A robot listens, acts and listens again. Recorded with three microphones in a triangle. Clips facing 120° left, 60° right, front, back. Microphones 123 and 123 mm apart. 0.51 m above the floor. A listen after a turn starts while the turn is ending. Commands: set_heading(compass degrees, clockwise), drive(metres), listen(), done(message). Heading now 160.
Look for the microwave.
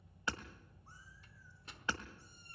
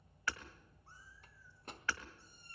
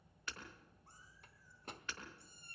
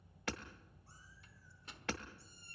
set_heading(190)
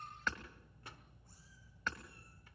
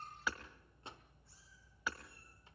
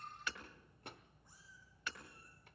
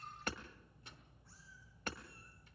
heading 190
done("Facing the microwave, 1 to 2 m away.")